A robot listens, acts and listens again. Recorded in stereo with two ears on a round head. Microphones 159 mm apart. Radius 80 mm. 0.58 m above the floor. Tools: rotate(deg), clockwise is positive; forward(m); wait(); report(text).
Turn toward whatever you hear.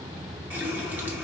rotate(30)
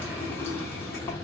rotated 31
rotate(-15)
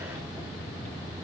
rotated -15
wait()
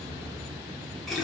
report("Facing the running tap.")